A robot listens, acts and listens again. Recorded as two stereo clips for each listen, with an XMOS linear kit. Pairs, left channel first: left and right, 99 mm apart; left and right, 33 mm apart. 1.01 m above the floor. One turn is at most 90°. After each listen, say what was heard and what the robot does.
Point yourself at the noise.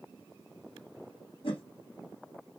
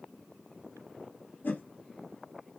The whoosh: about 60° left or 120° left. Turn 60° left.
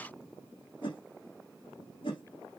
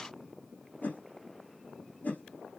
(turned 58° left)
So it is at 60° left. Turn 60° left.
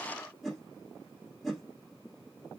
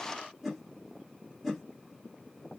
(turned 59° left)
Found it: a whoosh, straight ahead.